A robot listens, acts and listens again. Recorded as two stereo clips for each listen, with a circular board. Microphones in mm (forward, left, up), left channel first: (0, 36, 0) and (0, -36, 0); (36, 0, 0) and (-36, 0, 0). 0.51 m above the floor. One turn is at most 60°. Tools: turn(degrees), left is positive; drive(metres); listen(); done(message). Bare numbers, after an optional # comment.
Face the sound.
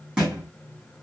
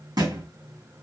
# The thud: 175° right.
turn(-60)
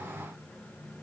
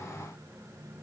# Nothing new. It was at 115° right.
turn(-60)
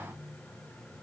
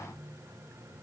# Nothing new. It was at 55° right.
turn(-55)
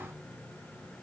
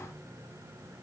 done("I heard a thud from this way, but can't make it out now.")